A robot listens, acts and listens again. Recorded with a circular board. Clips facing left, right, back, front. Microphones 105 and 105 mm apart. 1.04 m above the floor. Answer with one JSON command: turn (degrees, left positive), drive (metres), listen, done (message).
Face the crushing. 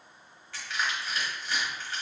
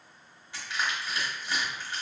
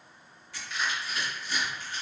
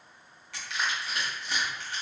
{"turn": -15}
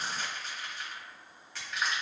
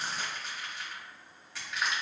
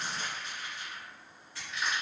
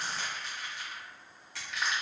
{"done": "Found it: crushing, straight ahead, 1 to 2 m away."}